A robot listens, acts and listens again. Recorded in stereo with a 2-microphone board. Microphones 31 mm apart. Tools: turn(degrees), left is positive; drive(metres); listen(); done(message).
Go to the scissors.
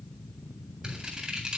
turn(degrees=-35)
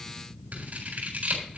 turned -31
turn(degrees=-110)
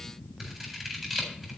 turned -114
drive(metres=1.0)
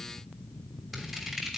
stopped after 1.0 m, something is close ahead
done("Blocked. The scissors is further on, straight ahead.")